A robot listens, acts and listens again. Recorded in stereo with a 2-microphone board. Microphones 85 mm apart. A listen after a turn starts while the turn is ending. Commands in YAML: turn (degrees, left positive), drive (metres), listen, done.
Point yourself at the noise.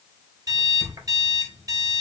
turn: -45
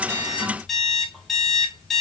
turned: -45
done: "Facing the alarm clock, 2 to 4 m away."